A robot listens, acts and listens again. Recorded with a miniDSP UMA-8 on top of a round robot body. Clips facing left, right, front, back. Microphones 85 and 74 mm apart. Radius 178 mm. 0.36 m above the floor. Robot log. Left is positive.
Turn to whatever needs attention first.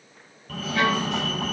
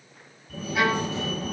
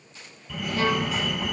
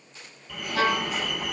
note: The fire alarm: 90° left.
cmd yaw +90
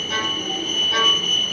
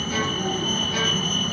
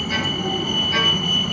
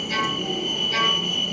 note: The fire alarm is now 35° right.
cmd yaw -35
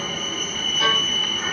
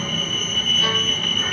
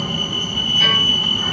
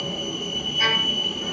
note: The fire alarm is now 10° left.
cmd yaw +10
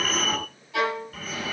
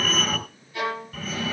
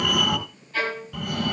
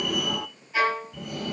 end: Found it: a fire alarm, straight ahead.